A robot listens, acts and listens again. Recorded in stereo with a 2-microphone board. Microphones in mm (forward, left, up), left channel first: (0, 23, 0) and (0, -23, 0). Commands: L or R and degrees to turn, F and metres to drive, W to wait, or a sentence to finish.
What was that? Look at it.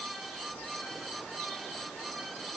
W
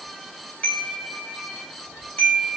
L35
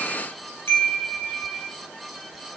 L115
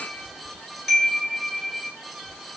Found it: a chime, straight ahead.